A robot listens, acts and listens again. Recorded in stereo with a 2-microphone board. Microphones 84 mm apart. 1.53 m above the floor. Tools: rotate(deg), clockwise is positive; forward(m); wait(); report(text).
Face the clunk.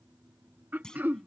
rotate(-30)
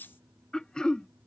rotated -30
wait()
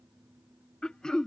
report("I heard a clunk, but can't make it out now. It was about 20° right or 140° left.")